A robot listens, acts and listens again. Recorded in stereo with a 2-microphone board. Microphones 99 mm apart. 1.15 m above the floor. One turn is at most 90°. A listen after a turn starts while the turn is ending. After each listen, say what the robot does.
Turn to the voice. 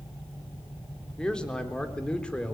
Turn 30° left.
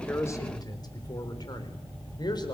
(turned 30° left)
Turn 90° left.
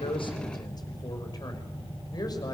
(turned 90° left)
Turn 40° left.
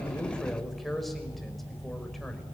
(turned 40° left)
Found it: a man speaking, straight ahead.